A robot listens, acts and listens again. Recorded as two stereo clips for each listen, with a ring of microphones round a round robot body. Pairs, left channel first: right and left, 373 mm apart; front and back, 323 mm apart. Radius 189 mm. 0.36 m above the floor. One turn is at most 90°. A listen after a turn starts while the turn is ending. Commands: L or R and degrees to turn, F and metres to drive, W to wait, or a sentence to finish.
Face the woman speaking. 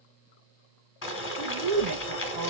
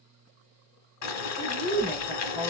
L90
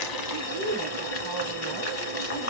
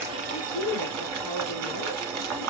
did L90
Found it: a woman speaking, straight ahead, 2 to 4 m away.